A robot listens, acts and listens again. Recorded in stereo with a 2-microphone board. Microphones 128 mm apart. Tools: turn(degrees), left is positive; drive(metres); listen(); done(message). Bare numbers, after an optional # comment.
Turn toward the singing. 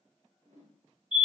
listen()
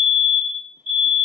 listen()
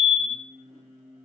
turn(-90)
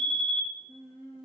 done("Facing the singing, over 4 m away.")